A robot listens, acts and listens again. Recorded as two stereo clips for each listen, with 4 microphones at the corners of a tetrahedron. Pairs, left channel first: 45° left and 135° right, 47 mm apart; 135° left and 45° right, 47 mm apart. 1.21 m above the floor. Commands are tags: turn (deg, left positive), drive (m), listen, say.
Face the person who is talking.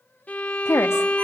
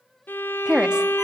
<turn deg="25"/>
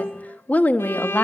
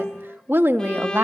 <turn deg="-10"/>
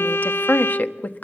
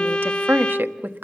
<say>Found it: a woman speaking, straight ahead.</say>